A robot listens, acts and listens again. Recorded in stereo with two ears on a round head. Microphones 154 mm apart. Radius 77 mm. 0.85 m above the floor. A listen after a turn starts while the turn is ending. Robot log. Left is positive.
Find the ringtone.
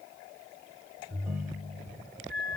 cmd yaw -30
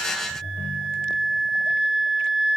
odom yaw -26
note: So it is at 15° left.
cmd yaw +15
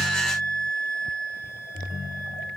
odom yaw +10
end: Facing the ringtone.